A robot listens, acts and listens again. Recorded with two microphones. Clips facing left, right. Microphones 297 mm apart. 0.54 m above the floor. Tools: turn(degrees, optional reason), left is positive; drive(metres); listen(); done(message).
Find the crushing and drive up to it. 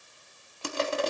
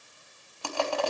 turn(degrees=20, reason="The crushing: about 20° left or 160° left.")
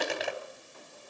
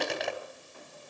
drive(metres=1.0)
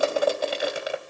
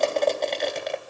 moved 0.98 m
turn(degrees=10, reason="The crushing is now 10° left.")
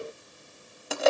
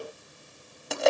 drive(metres=1.0)
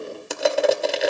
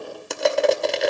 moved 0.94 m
drive(metres=1.0)
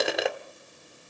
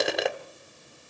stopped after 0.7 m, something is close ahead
done("I am next to the crushing.")